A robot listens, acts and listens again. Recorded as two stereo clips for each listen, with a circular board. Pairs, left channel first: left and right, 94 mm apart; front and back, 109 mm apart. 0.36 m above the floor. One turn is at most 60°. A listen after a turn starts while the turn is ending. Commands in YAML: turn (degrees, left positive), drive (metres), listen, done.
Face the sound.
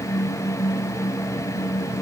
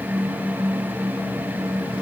listen: true
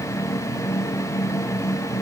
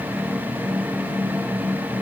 listen: true
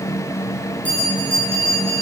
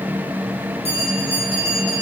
turn: 15
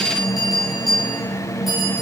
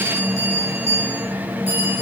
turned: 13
done: "Facing the bell."